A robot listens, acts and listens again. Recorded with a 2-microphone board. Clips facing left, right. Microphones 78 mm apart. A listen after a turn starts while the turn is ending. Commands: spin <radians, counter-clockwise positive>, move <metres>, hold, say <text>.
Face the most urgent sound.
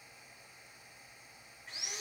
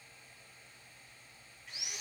hold
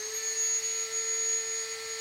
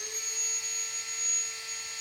hold
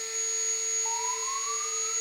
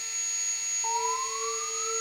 spin -1.57
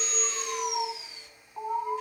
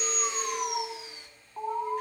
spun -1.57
say Found it: an alarm, straight ahead.